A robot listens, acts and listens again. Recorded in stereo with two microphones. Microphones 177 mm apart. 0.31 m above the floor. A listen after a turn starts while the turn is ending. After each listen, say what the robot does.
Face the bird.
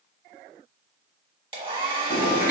Turn 70° left.
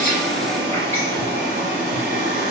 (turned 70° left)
Turn 15° left.
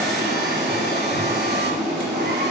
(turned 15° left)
Found it: a bird, straight ahead.